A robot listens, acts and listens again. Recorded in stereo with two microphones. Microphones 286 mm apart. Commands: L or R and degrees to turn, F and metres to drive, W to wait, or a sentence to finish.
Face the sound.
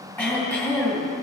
L30
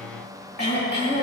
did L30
L145
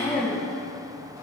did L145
L30
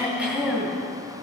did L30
Found it: throat clearing, straight ahead.